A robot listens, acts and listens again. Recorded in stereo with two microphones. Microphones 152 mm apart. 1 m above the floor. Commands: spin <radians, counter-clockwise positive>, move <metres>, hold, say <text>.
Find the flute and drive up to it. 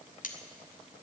hold
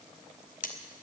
hold
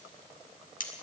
say I can't make out a flute, only cutlery clinking.